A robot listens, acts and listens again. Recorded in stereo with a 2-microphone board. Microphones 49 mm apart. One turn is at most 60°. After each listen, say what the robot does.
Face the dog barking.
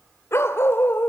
Turn 50° left.
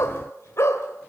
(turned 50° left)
Turn 60° left.
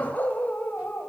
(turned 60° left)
Turn 40° left.
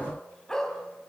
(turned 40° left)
Turn 15° left.
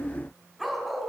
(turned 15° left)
Found it: a dog barking, straight ahead.